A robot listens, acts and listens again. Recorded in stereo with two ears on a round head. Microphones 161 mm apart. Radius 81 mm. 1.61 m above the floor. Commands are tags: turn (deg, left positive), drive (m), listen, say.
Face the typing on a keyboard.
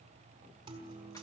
<listen/>
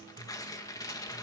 <listen/>
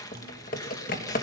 <turn deg="50"/>
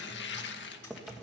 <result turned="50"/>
<say>Found it: typing on a keyboard, straight ahead, 1 to 2 m away.</say>